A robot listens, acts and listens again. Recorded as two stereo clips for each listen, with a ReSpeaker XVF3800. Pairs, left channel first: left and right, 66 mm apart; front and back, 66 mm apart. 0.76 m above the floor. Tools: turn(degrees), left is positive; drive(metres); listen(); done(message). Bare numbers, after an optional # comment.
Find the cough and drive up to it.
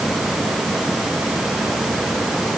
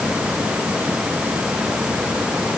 listen()
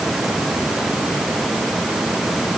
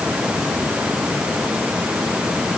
listen()
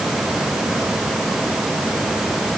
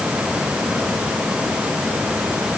done("I can't make out a cough.")